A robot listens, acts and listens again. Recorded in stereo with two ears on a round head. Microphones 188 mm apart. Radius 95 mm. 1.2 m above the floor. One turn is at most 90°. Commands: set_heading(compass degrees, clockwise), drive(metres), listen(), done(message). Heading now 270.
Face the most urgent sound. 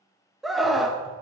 set_heading(240)
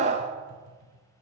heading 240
set_heading(275)
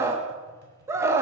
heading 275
set_heading(285)
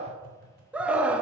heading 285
done("Found it: a scream, straight ahead, 1 to 2 m away.")